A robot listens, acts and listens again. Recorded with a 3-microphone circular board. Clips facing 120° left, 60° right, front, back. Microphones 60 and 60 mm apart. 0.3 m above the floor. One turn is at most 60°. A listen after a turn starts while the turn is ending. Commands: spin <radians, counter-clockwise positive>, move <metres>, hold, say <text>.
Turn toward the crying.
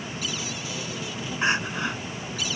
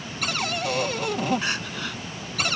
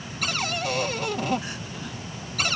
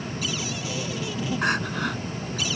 spin -1.05
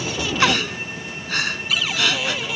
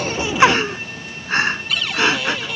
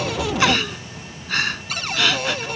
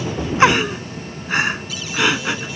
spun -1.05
spin -1.05
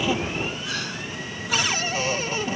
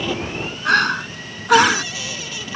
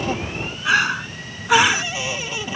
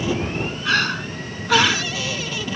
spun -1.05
spin -1.05
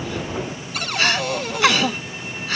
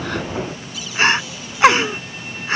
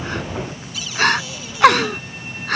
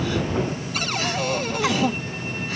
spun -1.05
say Found it: crying, straight ahead.